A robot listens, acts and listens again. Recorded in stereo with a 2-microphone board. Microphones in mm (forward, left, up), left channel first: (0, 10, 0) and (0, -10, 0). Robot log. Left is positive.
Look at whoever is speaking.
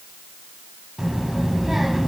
cmd yaw -30
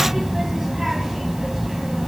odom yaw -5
note: The child speaking: about 15° right or 165° right.
cmd yaw -15
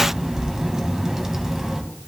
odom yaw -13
note: So it is at 150° right.
cmd yaw -150
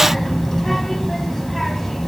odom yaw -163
note: The child speaking is now 15° left.
cmd yaw +15
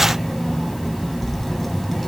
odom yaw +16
end: Found it: a child speaking, straight ahead, 2 to 4 m away.